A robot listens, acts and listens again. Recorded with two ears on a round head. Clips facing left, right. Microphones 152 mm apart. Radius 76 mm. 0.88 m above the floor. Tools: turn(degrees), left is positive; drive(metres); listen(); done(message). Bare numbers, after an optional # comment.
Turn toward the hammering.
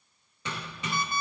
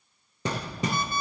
# The hammering: about 35° right or 145° right.
turn(-35)
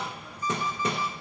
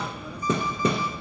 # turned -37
# So it is at 110° right.
turn(-110)
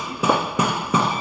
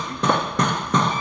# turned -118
done("Found it: hammering, straight ahead, under 1 m away.")